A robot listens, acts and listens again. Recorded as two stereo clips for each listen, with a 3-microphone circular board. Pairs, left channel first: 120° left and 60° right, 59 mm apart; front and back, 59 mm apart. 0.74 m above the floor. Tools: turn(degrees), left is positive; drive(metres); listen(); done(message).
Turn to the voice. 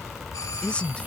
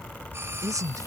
turn(degrees=-170)
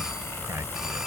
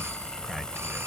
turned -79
turn(degrees=-90)
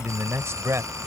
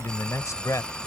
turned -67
turn(degrees=-25)
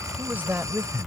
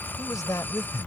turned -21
done("Facing the man speaking.")